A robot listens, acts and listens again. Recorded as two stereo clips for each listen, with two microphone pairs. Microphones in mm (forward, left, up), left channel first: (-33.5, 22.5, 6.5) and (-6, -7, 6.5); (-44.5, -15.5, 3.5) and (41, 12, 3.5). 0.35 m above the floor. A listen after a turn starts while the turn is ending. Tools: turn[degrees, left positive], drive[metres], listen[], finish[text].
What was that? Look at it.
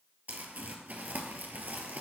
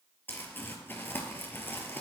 Thought: The crumpling: 95° right.
Action: turn[-95]
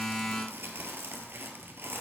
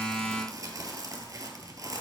Thought: The crumpling is now 30° right.
Action: turn[-30]
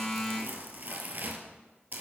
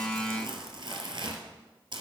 Action: finish[Found it: crumpling, straight ahead.]